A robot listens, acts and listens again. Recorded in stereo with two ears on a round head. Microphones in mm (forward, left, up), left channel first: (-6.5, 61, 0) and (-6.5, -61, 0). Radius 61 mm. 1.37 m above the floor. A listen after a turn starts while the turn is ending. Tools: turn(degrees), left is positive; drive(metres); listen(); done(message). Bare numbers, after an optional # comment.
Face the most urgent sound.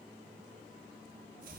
listen()
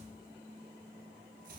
listen()
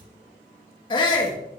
# The shout: about 40° left or 140° left.
turn(40)
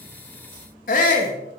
# So it is at 105° left.
turn(105)
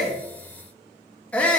# The shout is now 10° left.
turn(10)
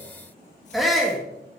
done("Facing the shout.")